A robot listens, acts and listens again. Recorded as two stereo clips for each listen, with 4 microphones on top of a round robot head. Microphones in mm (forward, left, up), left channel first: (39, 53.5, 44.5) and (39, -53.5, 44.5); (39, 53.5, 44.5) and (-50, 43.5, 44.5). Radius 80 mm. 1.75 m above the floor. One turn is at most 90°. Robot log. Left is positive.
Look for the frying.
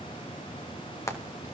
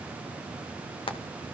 note: The frying: 30° left.
cmd yaw +30
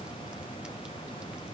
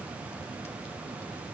cmd idle
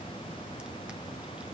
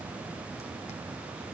cmd idle
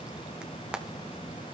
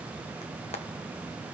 note: The frying is now 10° right.
cmd yaw -10
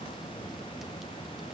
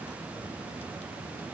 cmd idle
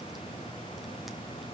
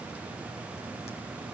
cmd idle
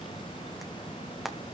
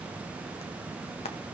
end: Found it: frying, straight ahead, 2 to 4 m away.